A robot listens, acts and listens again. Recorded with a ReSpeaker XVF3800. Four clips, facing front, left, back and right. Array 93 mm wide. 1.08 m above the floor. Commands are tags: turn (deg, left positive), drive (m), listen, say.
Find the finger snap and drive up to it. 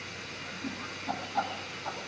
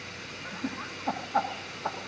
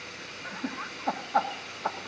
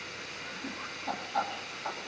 <listen/>
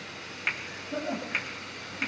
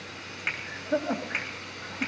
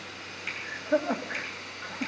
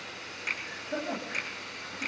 <turn deg="40"/>
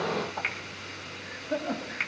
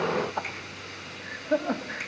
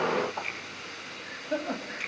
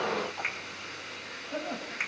<turn deg="-30"/>
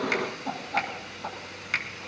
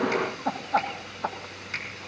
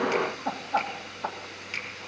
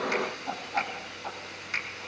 <drive m="1.0"/>
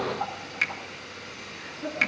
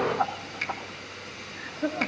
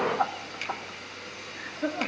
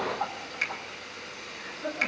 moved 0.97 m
<drive m="1.0"/>
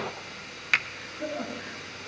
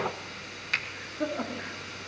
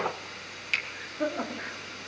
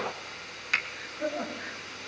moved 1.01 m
<drive m="1.0"/>
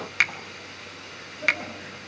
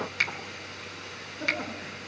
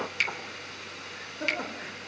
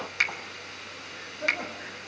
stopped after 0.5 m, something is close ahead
<say>Arrived at the finger snap, straight ahead.</say>